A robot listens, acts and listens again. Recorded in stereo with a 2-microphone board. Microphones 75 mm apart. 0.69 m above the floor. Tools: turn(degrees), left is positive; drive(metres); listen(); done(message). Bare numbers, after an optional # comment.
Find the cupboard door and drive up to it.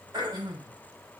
listen()
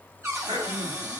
# The cupboard door: about 35° right or 145° right.
turn(-35)
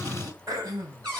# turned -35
# So it is at 110° right.
turn(-110)
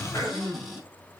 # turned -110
drive(1.0)
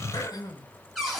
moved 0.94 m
drive(1.0)
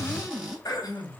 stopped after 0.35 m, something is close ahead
# The cupboard door is now 15° right.
turn(-15)
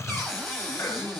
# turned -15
done("I am next to the cupboard door.")